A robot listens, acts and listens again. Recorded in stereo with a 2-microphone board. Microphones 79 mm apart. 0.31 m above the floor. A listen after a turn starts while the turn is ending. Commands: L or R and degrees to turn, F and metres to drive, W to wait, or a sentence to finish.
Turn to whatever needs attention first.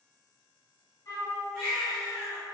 L30
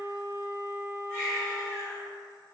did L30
L150
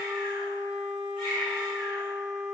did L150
Found it: a baby crying, straight ahead, 1 to 2 m away.